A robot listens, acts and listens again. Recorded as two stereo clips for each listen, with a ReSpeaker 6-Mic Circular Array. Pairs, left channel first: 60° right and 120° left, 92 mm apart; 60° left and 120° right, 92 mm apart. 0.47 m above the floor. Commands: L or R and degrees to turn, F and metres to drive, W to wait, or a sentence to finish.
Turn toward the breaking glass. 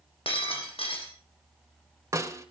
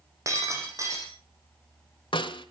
R65
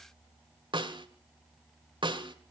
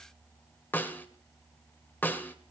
I heard breaking glass from this way, but can't make it out now.